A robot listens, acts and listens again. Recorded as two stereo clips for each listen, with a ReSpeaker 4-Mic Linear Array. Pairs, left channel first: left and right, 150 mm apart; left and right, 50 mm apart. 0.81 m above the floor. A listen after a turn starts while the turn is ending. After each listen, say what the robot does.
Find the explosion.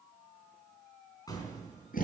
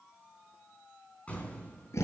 Turn 25° left.
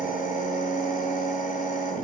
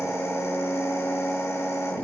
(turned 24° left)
Keep listening.
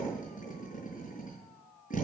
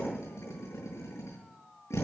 I heard an explosion, but can't make it out now. It was about straight ahead or 130° left.